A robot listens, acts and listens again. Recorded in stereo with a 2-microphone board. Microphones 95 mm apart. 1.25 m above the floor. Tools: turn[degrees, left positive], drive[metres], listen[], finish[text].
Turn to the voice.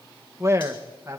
Thought: The man speaking: about 30° right or 150° right.
Action: turn[-30]
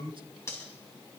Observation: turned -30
Thought: So it is at 120° right.
Action: turn[-120]
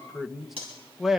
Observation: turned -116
Action: finish[Facing the man speaking.]